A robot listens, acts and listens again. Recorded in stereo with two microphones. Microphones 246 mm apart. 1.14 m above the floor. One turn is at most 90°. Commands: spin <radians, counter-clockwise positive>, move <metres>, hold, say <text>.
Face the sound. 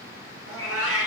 spin -1.13
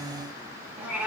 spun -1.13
say Found it: a cat meowing, straight ahead.